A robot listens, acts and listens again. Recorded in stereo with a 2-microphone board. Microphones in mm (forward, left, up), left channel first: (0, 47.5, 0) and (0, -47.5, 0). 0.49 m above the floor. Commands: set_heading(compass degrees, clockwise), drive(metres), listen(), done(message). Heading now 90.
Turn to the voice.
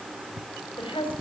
set_heading(20)
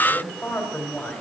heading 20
set_heading(0)
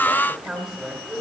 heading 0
done("Found it: a woman speaking, straight ahead, 2 to 4 m away.")